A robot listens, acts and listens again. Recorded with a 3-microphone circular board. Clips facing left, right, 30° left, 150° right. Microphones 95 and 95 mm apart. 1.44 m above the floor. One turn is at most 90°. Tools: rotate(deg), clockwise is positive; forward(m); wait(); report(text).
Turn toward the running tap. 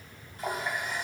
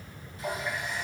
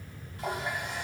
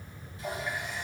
rotate(-55)
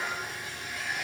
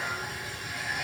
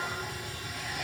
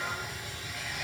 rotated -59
report("Facing the running tap, 2 to 4 m away.")